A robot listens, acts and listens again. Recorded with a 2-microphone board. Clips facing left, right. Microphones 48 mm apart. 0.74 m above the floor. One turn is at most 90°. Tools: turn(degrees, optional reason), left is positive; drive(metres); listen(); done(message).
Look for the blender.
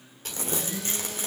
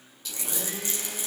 turn(degrees=-50, reason="The blender: about 50° right or 130° right.")
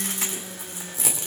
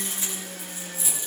turn(degrees=-80, reason="So it is at 80° right.")
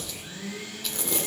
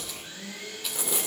turn(degrees=10, reason="The blender is now 10° left.")
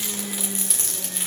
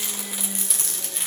done("Found it: a blender, straight ahead, over 4 m away.")